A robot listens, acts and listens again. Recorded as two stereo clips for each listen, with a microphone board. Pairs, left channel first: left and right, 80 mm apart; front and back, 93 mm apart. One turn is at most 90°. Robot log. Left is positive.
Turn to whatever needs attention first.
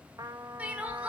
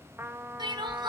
note: The crying: 160° right.
cmd yaw -90
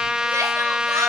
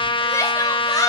note: Nothing new. It was at 70° right.
cmd yaw -70
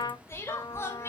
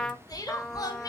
note: The crying is now 40° left.
cmd yaw +40
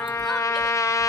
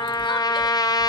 cmd idle
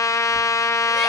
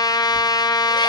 cmd idle
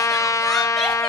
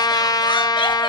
end: I heard crying from this way, but can't make it out now.